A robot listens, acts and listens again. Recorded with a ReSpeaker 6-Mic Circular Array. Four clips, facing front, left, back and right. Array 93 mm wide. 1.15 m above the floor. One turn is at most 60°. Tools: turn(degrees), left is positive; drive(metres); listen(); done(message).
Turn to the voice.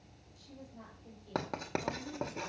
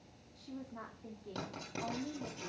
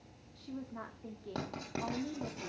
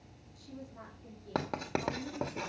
turn(degrees=60)
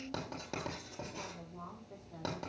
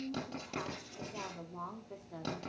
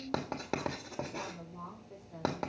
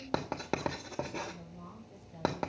turn(degrees=60)
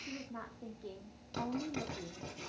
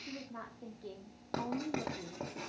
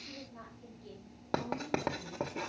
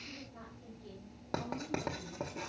turn(degrees=40)
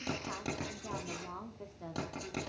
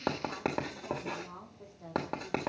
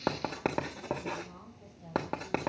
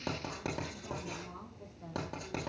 done("Found it: a woman speaking, straight ahead, 2 to 4 m away.")